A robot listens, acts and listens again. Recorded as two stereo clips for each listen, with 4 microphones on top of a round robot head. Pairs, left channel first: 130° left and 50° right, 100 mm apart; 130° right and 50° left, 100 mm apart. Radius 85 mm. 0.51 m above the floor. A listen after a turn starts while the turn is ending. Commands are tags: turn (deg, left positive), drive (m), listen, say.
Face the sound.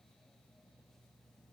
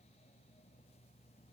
<listen/>
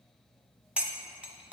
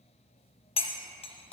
<turn deg="-125"/>
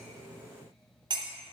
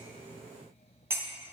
<turn deg="-15"/>
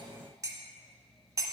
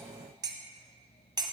<say>Facing the cutlery clinking.</say>